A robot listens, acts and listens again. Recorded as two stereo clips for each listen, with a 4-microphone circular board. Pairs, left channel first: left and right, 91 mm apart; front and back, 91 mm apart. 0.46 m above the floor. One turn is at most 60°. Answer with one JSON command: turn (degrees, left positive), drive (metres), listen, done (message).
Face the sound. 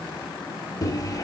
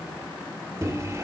{"turn": 60}
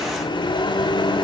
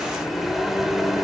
{"turn": 60}
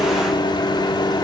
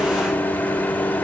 {"turn": 60}
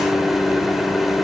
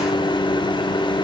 {"done": "Facing the microwave."}